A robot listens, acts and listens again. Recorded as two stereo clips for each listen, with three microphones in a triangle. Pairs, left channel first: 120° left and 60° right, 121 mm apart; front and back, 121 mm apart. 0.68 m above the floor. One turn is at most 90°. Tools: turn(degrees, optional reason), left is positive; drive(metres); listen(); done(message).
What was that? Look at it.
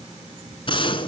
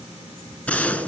turn(degrees=80, reason="The gunshot: 80° left.")
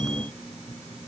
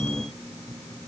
done("Facing where the gunshot came from. I can't hear it now.")